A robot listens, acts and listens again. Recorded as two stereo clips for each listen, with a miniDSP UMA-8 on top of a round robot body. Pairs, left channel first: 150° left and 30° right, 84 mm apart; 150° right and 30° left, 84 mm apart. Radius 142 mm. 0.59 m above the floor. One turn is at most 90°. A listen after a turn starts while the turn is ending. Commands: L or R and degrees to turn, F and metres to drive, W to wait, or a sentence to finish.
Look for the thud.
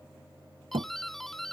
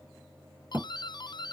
R45
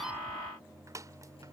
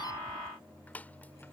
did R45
Facing where the thud came from. I can't hear it now.